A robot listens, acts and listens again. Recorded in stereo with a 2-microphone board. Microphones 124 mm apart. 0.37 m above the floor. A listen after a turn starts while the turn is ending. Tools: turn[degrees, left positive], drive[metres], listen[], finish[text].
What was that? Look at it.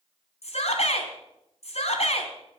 Thought: The shout: about 65° left or 115° left.
Action: turn[65]
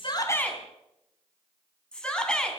Thought: So it is at 10° left.
Action: turn[10]
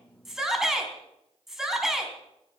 Action: finish[Facing the shout.]